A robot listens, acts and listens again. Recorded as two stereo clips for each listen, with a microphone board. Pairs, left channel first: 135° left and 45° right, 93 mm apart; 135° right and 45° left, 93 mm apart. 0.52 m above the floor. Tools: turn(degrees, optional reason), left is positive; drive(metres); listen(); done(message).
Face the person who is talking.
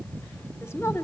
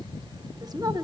turn(degrees=80, reason="The woman speaking: 80° left.")
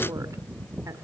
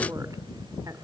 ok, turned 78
listen()
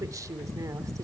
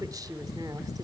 done("Facing the woman speaking, 1 to 2 m away.")